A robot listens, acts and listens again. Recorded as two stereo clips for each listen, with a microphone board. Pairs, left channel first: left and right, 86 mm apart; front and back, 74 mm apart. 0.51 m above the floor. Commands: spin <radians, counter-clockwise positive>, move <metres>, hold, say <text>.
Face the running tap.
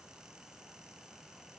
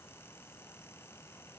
hold
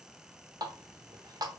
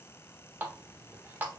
spin -2.09
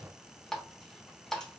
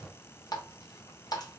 say Facing the running tap, under 1 m away.